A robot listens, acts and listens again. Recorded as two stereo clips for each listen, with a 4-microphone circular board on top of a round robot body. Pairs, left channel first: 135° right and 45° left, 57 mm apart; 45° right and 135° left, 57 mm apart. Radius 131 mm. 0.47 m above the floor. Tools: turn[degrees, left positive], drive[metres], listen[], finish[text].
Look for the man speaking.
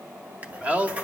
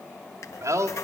Thought: The man speaking: 110° left.
Action: turn[110]
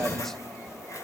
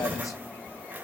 Thought: The man speaking is now 50° right.
Action: turn[-50]
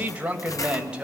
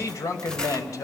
Thought: The man speaking is now 30° right.
Action: turn[-30]
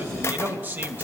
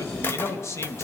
Thought: The man speaking is now 10° right.
Action: turn[-10]
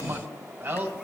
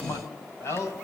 Action: finish[Facing the man speaking, 2 to 4 m away.]